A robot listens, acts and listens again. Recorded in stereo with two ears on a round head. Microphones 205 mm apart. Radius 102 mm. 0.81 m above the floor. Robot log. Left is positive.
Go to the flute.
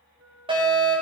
note: The flute: about 65° right or 115° right.
cmd yaw -65
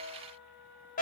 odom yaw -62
cmd fwd 1.0
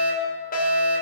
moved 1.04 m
cmd idle
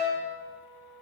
cmd fwd 1.0
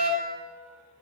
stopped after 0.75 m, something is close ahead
cmd idle
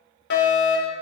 cmd idle
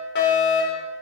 end: I heard a flute from this way, but can't make it out now. I did not reach it.